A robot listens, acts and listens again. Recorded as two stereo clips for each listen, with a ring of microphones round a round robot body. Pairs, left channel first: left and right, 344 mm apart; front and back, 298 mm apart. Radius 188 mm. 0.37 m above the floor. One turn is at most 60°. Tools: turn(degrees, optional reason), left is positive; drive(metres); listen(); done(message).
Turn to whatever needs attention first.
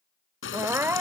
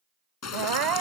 turn(degrees=-60, reason="The crying: 175° right.")
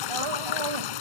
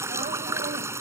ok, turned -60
turn(degrees=-60, reason="Nothing new. It was at 115° right.")
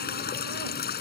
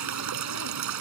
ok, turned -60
turn(degrees=-55, reason="Nothing new. It was at 55° right.")
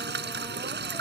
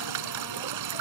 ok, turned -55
done("Facing where the crying came from. I can't hear it now.")